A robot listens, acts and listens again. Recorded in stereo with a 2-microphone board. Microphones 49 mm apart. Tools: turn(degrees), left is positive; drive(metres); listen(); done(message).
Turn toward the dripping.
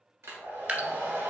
turn(degrees=-35)
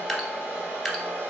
done("Facing the dripping, under 1 m away.")